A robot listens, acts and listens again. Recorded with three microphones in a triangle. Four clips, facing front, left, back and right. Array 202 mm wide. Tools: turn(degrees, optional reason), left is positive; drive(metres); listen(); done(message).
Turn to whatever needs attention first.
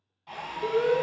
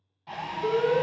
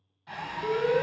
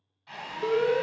turn(degrees=-60, reason="The alarm: 60° right.")
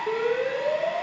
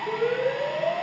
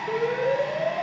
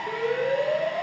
done("Facing the alarm, 2 to 4 m away.")